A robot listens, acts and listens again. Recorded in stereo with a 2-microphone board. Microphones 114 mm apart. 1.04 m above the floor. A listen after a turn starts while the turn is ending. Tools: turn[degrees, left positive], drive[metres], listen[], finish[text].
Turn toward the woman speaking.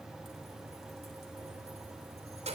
Action: listen[]
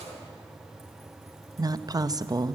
Thought: The woman speaking: about 35° right or 145° right.
Action: turn[-35]
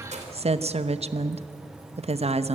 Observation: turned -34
Thought: So it is at 110° right.
Action: turn[-110]
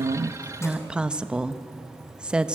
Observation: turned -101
Thought: The woman speaking is now 10° right.
Action: turn[-10]
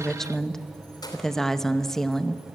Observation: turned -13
Action: finish[Found it: a woman speaking, straight ahead.]